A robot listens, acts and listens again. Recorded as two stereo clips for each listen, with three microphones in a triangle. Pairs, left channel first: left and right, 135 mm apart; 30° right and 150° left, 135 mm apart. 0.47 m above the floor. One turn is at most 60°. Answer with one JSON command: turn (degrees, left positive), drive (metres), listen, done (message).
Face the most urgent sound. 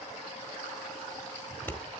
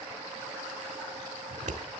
{"listen": true}
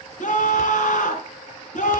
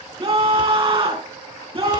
{"turn": 60}
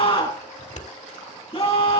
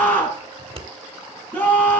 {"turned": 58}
{"turn": 45}
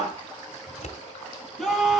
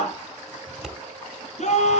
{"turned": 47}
{"done": "Facing the scream."}